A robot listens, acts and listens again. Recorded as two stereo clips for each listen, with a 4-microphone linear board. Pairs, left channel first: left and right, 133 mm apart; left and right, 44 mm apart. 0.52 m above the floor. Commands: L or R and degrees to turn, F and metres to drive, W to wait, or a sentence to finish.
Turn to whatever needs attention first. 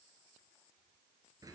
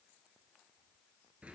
W
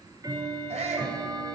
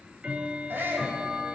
R55
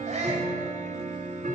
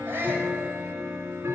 R65
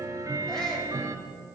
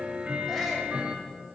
W
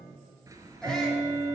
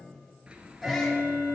W
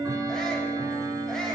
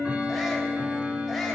Facing where the shout came from. I can't hear it now.